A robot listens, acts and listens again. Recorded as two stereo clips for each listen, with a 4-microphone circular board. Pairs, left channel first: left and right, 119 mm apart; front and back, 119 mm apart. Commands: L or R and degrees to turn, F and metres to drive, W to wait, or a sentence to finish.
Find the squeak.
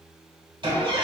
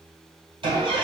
R140
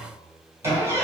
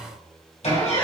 R25
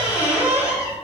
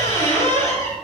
R15
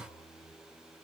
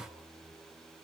W
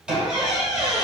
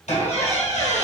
R10
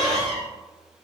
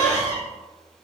Found it: a squeak, straight ahead.